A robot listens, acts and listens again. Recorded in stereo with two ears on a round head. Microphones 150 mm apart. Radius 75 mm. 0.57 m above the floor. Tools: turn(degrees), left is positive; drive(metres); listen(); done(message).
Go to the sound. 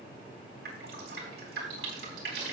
turn(degrees=-65)
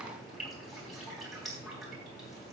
drive(metres=1.0)
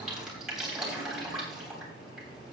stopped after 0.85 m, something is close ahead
done("Blocked. The dripping is further on, straight ahead.")